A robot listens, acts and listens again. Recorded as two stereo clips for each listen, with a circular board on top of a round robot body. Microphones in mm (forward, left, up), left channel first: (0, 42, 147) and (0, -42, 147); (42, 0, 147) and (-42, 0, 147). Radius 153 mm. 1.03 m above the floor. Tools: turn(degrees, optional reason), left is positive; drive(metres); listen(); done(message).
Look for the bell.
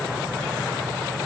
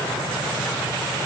listen()
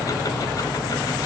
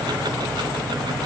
listen()
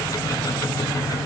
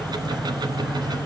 done("I can't make out a bell to turn to.")